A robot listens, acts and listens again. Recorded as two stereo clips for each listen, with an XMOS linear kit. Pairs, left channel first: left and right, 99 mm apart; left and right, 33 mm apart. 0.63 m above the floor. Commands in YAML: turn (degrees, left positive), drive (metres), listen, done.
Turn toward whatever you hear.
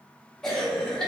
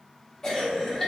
turn: 30
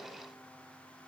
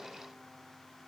listen: true
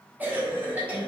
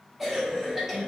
turn: -20
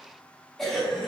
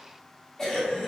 done: "Facing the cough."